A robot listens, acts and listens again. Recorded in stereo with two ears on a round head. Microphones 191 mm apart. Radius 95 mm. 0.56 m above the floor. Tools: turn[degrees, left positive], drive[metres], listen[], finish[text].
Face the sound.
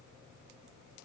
Action: listen[]
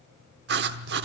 Thought: The writing: about 50° right or 130° right.
Action: turn[-50]
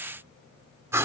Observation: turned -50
Thought: So it is at 15° right.
Action: turn[-15]
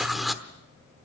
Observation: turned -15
Action: finish[Facing the writing.]